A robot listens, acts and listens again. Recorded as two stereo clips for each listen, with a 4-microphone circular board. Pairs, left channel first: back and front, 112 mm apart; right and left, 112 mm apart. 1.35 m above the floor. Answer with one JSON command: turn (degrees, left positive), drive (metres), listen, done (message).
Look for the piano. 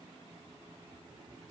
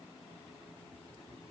{"listen": true}
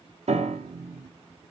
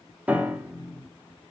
{"turn": 15}
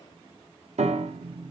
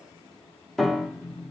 {"done": "Found it: a piano, straight ahead, 1 to 2 m away."}